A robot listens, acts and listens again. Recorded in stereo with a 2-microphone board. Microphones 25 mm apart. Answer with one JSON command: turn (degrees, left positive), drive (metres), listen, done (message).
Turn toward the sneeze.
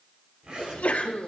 {"turn": 90}
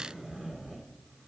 {"done": "I heard a sneeze from this way, but can't make it out now."}